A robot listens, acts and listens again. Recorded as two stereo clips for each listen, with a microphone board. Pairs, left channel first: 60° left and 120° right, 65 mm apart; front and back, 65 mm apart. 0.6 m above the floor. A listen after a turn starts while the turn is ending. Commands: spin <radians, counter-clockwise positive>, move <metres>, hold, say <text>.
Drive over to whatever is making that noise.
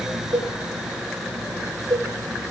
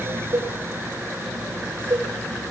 spin -2.44
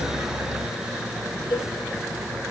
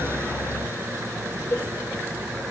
hold
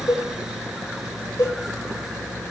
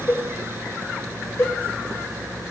spin 0.79
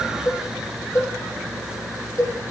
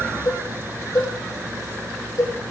spin 0.35
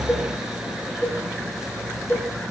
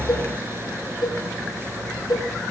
move 1.0
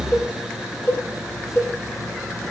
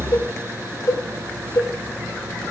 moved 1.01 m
move 1.0
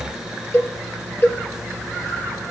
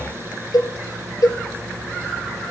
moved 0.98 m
move 1.0
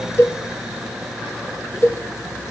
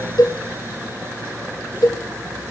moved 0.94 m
spin 0.17
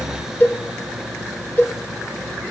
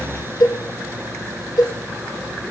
move 1.0
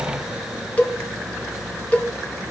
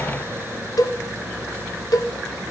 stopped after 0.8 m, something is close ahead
say Arrived at the cowbell, straight ahead.